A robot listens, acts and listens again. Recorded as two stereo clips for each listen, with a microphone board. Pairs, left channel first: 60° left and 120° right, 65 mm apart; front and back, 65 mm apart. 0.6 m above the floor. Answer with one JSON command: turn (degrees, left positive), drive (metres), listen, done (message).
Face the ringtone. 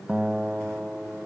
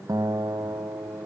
{"listen": true}
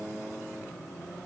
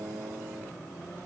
{"listen": true}
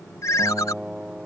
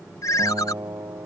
{"turn": 30}
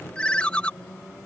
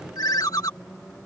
{"turn": -10}
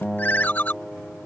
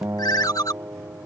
{"done": "Found it: a ringtone, straight ahead."}